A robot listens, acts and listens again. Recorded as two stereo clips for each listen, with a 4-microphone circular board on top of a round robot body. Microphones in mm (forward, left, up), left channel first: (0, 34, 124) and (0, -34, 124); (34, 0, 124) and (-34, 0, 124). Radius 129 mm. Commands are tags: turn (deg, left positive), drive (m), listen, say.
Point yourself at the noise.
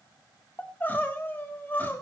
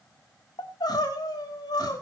<turn deg="25"/>
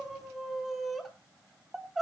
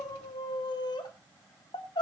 <say>Found it: crying, straight ahead, 2 to 4 m away.</say>